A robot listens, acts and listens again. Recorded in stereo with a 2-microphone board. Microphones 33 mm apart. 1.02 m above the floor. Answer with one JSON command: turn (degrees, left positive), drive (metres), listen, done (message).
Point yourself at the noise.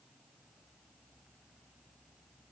{"listen": true}
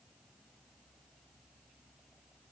{"listen": true}
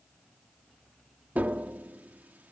{"turn": -60}
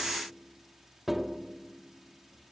{"done": "Found it: tapping, straight ahead."}